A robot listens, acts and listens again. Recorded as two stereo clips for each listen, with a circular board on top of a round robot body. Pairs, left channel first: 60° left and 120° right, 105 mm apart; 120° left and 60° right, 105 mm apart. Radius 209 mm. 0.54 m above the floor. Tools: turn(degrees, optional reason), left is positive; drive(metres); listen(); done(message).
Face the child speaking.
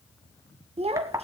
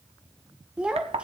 turn(degrees=-140, reason="The child speaking: 140° right.")
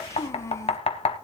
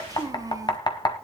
done("Found it: a child speaking, straight ahead.")